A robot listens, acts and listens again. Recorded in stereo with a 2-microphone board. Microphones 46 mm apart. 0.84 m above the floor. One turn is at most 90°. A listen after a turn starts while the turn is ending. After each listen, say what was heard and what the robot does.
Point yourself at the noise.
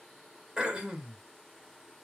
The throat clearing: about 25° right or 155° right. Turn 25° right.
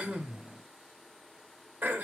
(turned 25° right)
So it is at 135° right. Turn 90° right.
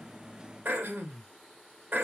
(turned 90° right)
The throat clearing is now 50° right. Turn 50° right.
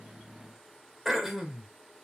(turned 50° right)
Facing the throat clearing.